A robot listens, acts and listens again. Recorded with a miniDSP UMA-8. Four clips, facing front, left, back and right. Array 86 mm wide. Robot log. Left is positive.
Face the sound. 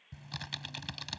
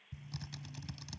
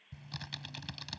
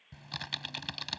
note: The typing on a keyboard: 75° right.
cmd yaw -75
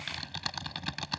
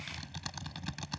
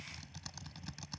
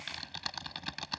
note: The typing on a keyboard is now 20° right.
cmd yaw -20
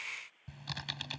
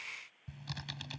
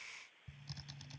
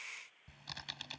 end: Facing the typing on a keyboard.